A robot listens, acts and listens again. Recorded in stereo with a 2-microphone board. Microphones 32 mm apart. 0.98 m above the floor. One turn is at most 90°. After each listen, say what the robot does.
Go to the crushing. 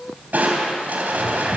Turn 65° right.
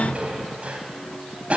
Turn 45° right.
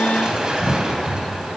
Turn 25° right.
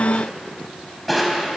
Drive 1.0 m forward.
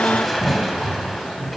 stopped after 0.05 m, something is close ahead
Something is in my way. I am facing the crushing but have not reached it.